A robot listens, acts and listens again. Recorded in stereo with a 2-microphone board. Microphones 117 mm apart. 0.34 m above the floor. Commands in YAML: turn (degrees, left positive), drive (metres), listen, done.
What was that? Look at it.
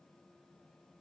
listen: true
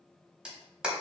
turn: -30
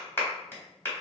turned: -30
turn: 25
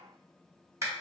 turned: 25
turn: -30
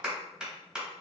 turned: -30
done: "Facing the clap."